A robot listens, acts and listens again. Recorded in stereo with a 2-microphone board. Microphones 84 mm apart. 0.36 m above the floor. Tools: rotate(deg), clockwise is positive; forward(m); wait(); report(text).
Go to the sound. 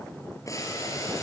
rotate(-40)
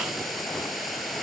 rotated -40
forward(1.0)
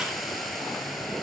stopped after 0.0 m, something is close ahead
report("Blocked. The boiling is further on, straight ahead.")